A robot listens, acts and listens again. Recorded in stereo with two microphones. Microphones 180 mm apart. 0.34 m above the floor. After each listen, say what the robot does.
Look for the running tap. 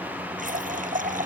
Turn 45° right.
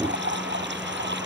Turn 90° right.
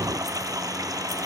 Keep listening.
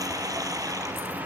Keep listening.
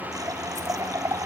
Turn 20° right.
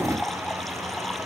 Facing the running tap.